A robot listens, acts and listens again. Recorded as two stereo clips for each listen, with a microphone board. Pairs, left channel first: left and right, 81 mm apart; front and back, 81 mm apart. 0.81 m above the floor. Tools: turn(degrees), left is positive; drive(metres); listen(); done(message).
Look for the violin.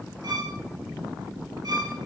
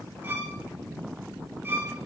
turn(degrees=-115)
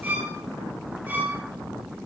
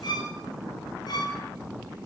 turn(degrees=-25)
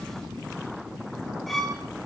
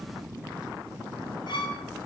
done("Found it: a violin, straight ahead.")